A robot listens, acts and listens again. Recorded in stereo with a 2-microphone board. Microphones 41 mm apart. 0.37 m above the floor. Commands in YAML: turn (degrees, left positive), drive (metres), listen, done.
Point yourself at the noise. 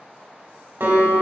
turn: -65
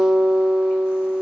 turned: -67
turn: -15
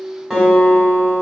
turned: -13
done: "Found it: a guitar, straight ahead, 2 to 4 m away."